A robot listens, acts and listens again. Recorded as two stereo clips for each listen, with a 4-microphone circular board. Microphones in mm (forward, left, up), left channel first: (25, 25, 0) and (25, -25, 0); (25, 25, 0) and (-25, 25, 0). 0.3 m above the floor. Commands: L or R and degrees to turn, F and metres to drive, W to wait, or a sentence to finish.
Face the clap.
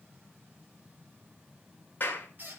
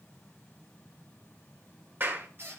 L140
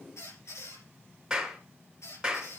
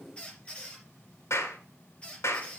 R10
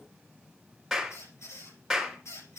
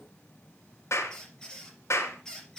Facing the clap.